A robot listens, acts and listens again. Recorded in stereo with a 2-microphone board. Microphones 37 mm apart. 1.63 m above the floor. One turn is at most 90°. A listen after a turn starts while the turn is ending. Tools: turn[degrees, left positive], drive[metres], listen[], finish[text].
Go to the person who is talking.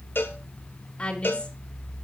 Thought: The woman speaking: about 35° left or 145° left.
Action: turn[35]
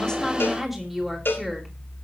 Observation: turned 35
Action: drive[1.0]
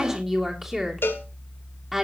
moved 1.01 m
Action: drive[1.0]
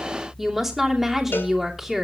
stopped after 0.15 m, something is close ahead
Action: finish[Something is in my way. I am facing the woman speaking but have not reached it.]